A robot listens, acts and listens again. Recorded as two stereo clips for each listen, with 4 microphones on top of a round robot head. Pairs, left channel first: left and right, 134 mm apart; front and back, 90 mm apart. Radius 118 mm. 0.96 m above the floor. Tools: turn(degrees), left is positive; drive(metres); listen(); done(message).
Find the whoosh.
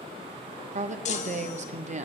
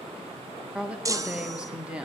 listen()
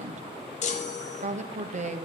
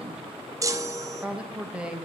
listen()
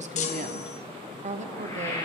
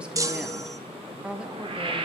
turn(degrees=160)
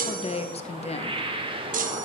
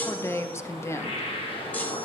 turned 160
turn(degrees=-40)
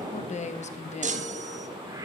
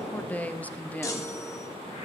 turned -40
listen()
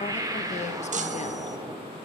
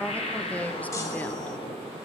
turn(degrees=-25)
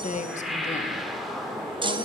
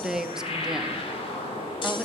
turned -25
done("Facing the whoosh, 1 to 2 m away.")